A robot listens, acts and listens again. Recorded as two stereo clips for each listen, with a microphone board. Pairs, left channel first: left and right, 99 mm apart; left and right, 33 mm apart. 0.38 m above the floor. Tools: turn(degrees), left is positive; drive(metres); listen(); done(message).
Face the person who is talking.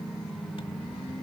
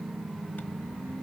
listen()
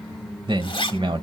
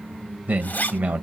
turn(degrees=-55)
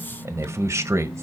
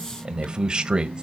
turn(degrees=-35)
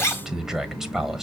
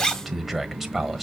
done("Facing the man speaking, 1 to 2 m away.")